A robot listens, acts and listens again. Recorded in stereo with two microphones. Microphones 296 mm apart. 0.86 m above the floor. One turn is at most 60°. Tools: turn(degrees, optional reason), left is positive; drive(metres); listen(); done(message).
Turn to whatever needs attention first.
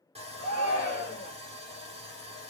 turn(degrees=30, reason="The shout: about 30° left or 150° left.")
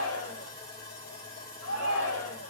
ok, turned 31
turn(degrees=60, reason="So it is at 115° left.")
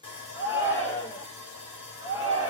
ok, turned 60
turn(degrees=55, reason="The shout is now 55° left.")
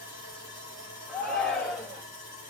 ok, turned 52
done("Facing the shout.")